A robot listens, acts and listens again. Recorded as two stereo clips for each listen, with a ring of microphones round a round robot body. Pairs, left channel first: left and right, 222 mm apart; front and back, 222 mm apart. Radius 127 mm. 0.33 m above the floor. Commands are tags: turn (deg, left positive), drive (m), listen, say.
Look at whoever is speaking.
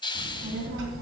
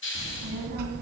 <turn deg="-130"/>
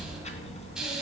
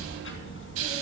<turn deg="30"/>
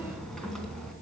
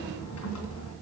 <say>Facing the child speaking.</say>